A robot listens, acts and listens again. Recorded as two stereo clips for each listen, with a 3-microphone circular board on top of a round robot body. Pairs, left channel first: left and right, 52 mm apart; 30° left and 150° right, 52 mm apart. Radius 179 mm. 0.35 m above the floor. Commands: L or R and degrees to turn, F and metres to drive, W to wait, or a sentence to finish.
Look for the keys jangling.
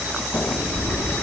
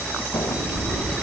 L95
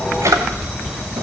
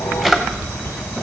R10
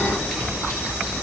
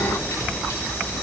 W
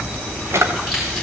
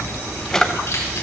Facing the keys jangling, over 4 m away.